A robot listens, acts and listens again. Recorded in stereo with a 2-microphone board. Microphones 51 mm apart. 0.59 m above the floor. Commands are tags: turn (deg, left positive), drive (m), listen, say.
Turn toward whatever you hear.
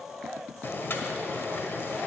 <turn deg="50"/>
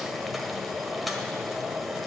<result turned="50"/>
<say>Facing the boiling.</say>